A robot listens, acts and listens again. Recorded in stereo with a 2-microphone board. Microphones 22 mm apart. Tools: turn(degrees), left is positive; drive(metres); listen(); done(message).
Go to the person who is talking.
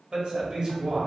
turn(degrees=-45)
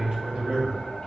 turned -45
turn(degrees=-90)
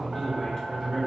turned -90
turn(degrees=35)
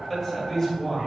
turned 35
turn(degrees=10)
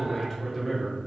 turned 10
drive(metres=1.0)
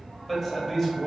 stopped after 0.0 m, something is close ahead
done("Blocked. The man speaking is further on, straight ahead.")